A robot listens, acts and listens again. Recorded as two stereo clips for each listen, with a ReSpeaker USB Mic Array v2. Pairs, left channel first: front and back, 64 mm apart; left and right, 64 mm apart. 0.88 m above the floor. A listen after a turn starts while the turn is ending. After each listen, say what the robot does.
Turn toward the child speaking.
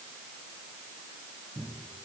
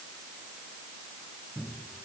Keep listening.
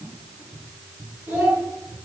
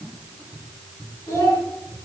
Turn 120° left.
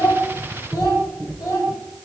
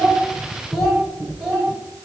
Found it: a child speaking, straight ahead, 2 to 4 m away.